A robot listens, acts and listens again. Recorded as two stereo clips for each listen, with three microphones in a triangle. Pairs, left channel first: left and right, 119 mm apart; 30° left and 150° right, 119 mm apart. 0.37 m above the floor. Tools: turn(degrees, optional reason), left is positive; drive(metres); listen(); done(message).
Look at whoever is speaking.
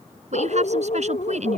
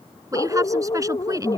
turn(degrees=-90, reason="The woman speaking: 90° right.")
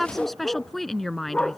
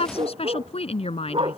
done("Facing the woman speaking.")